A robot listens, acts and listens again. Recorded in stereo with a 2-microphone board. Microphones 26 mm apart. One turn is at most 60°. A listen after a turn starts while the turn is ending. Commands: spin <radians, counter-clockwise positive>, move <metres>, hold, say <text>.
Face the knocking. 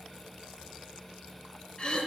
hold
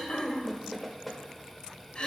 spin 0.52
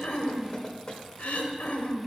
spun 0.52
spin 1.05
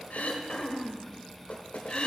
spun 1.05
spin 1.05
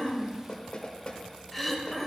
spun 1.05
spin 0.70
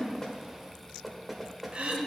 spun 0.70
say Facing the knocking, 1 to 2 m away.